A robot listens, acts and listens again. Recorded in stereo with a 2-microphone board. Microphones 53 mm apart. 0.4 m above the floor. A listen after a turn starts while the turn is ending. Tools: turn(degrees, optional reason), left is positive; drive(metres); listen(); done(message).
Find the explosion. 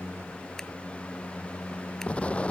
turn(degrees=25, reason="The explosion: about 25° left or 155° left.")
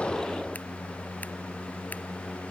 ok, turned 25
listen()
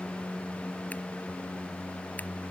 done("I heard an explosion, but can't make it out now. It was about straight ahead or 130° left.")